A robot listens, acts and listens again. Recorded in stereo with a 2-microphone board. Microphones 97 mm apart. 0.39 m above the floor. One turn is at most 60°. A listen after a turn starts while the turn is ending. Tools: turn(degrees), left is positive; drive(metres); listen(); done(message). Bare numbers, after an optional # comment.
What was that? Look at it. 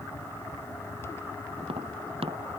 # The tapping: about 75° right or 105° right.
turn(-60)
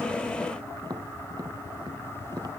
# So it is at 45° right.
turn(-45)
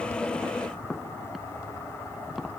done("Found it: tapping, straight ahead.")